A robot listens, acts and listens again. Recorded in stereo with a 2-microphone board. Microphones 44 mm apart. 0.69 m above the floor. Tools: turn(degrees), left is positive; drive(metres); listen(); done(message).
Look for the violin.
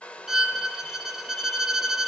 turn(degrees=-30)
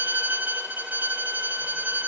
turn(degrees=-140)
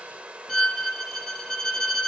turn(degrees=10)
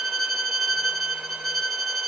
done("Facing the violin, under 1 m away.")